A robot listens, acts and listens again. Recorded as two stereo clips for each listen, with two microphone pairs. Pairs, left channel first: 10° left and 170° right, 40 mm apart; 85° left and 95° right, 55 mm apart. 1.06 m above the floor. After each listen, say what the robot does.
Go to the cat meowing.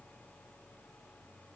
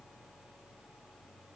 Keep listening.
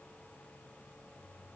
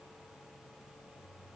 Keep listening.
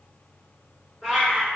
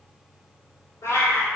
Turn 90° left.
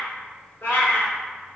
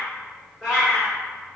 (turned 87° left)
Drive 1.0 m forward.
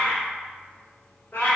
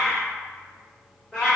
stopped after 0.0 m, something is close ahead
Turn 10° left.
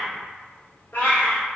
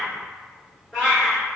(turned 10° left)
Something is in my way. I am facing the cat meowing but have not reached it.